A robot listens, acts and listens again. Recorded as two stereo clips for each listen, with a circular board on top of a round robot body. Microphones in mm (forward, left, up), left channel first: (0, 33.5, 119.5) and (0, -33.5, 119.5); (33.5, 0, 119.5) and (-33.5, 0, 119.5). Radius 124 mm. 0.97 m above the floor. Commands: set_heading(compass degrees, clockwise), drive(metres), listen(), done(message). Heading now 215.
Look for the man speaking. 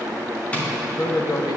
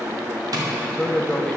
set_heading(135)
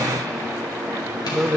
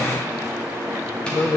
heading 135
done("Found it: a man speaking, straight ahead, 1 to 2 m away.")